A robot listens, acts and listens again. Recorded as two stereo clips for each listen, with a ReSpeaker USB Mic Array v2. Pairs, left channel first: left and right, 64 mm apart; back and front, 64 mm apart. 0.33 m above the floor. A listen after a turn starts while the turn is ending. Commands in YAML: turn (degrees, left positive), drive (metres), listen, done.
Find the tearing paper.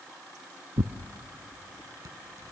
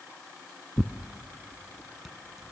turn: -85
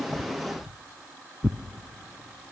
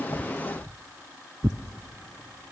turn: -10
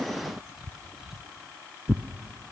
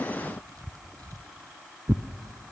done: "Found it: tearing paper, straight ahead, under 1 m away."